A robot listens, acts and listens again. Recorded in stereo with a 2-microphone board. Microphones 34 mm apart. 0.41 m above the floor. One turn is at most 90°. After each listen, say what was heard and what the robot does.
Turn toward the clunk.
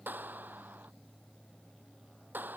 Keep listening.
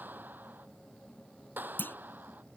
Turn 90° left.
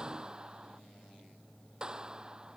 Facing where the clunk came from. I can't hear it now.